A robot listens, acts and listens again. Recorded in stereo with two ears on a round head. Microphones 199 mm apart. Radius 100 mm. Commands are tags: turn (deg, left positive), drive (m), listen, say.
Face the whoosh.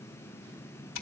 <listen/>
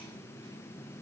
<listen/>
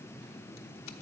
<say>I can't make out a whoosh to turn to.</say>